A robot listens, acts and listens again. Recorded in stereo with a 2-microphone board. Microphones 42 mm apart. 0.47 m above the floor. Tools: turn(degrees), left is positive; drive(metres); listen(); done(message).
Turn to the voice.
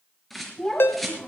turn(degrees=15)
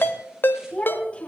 turn(degrees=150)
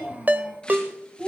turn(degrees=-40)
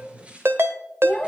turn(degrees=10)
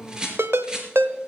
listen()
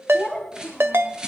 done("Facing the child speaking, 2 to 4 m away.")